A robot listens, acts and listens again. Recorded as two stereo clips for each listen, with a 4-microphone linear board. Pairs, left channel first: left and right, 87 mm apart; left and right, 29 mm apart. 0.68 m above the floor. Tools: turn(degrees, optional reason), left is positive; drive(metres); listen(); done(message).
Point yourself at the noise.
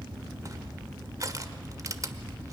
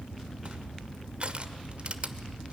turn(degrees=-40, reason="The crushing: about 40° right or 140° right.")
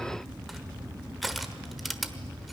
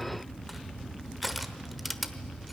done("Found it: crushing, straight ahead.")